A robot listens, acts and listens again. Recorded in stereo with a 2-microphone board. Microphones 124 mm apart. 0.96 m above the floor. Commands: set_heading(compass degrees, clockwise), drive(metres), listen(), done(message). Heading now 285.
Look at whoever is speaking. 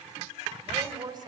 set_heading(320)
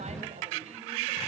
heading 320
listen()
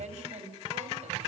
set_heading(70)
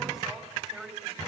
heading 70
done("Facing the woman speaking, over 4 m away.")